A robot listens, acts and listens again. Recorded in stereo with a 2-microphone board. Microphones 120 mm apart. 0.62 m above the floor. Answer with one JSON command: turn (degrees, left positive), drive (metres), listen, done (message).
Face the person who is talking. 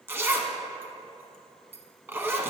{"listen": true}
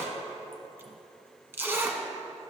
{"listen": true}
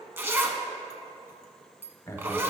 {"turn": 25}
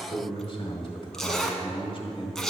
{"turn": 130}
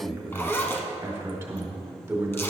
{"turn": -25}
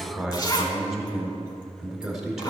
{"done": "Facing the man speaking, 1 to 2 m away."}